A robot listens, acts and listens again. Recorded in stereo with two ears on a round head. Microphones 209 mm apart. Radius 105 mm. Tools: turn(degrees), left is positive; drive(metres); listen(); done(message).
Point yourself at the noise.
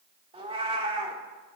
turn(degrees=-25)
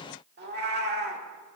turn(degrees=-130)
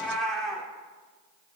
done("Facing the cat meowing, 1 to 2 m away.")